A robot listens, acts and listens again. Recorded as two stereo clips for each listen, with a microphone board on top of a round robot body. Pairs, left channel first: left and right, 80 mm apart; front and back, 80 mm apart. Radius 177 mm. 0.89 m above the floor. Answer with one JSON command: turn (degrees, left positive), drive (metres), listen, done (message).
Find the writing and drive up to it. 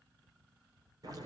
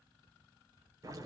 {"listen": true}
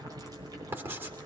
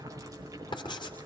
{"turn": -25}
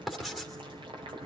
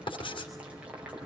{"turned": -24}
{"drive": 1.0}
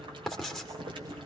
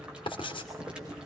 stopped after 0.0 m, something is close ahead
{"done": "Something is in my way. I am facing the writing but have not reached it."}